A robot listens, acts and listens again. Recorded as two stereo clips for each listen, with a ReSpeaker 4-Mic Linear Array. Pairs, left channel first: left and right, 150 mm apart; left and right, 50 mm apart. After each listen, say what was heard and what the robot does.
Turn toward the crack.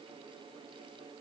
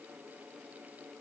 Keep listening.
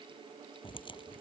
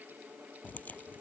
The crack: about 35° left or 145° left. Turn 35° left.
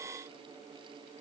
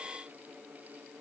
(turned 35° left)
Keep listening.
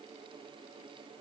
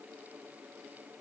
I heard a crack, but can't make it out now. It was about straight ahead or 110° left.